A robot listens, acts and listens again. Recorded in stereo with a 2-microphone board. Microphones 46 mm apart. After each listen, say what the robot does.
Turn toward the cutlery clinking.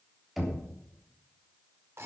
Keep listening.
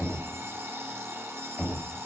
Keep listening.
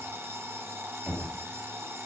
I can't make out cutlery clinking to turn to.